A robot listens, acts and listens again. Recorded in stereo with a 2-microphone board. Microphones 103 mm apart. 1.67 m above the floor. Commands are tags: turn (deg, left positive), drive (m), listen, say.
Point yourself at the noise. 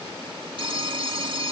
<turn deg="-60"/>
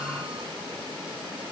<listen/>
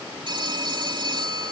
<turn deg="-55"/>
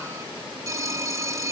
<turn deg="-35"/>
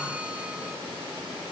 <listen/>
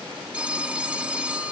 <turn deg="-10"/>
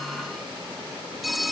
<say>Facing the phone ringing.</say>